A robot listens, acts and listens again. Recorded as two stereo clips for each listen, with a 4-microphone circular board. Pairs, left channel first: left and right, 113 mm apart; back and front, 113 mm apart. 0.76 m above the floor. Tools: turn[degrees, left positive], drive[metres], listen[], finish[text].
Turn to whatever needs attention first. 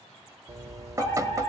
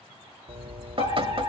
Thought: The fire alarm: 155° left.
Action: turn[155]
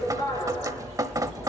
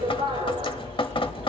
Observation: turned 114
Thought: The fire alarm is now 40° left.
Action: turn[40]
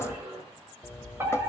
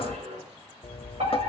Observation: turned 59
Thought: The fire alarm is now 20° right.
Action: turn[-20]
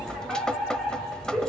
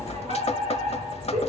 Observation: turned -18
Action: finish[Found it: a fire alarm, straight ahead.]